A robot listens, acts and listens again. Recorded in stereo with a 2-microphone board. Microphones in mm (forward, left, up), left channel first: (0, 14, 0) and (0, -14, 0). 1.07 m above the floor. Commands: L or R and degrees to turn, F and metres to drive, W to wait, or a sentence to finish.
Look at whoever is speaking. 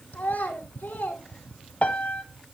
L60
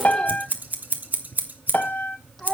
Facing the child speaking.